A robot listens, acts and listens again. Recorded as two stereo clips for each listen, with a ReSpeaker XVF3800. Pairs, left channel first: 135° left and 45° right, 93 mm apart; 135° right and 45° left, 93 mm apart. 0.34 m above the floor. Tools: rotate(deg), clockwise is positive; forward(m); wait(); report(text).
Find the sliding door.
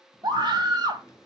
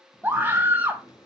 rotate(170)
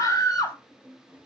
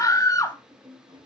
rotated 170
rotate(-30)
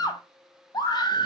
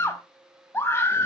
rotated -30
wait()
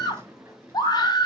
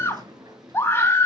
rotate(-15)
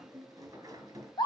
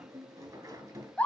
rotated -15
report("Found it: a sliding door, straight ahead.")